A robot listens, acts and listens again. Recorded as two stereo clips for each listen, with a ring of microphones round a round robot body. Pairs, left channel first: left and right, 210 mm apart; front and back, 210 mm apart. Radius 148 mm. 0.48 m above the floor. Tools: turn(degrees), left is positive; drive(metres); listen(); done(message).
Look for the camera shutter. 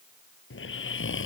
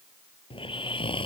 listen()
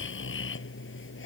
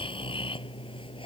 listen()
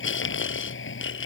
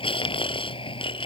done("I can't make out a camera shutter to turn to.")